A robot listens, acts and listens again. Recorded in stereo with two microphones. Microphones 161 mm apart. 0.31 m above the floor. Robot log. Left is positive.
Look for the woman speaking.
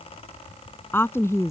note: The woman speaking: about 20° left or 160° left.
cmd yaw +20
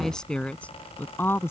note: The woman speaking: about 15° left or 165° left.
cmd yaw +15
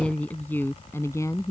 note: The woman speaking: about 20° left or 160° left.
cmd yaw +20
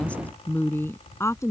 note: The woman speaking: about 20° left or 160° left.
cmd yaw +20
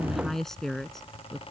cmd yaw +30
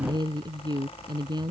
note: So it is at 30° right.
cmd yaw -30
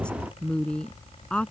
end: Found it: a woman speaking, straight ahead.